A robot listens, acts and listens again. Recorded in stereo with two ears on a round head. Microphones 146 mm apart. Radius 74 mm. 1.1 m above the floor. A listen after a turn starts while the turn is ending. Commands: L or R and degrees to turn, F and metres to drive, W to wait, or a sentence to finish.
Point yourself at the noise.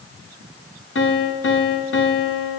L90
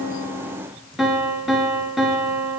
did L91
Facing the piano.